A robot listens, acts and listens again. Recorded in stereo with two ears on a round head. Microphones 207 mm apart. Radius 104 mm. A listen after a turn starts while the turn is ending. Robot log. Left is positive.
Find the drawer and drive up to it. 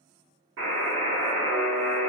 cmd idle
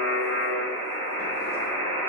cmd idle
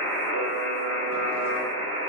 end: I can't make out a drawer to turn to.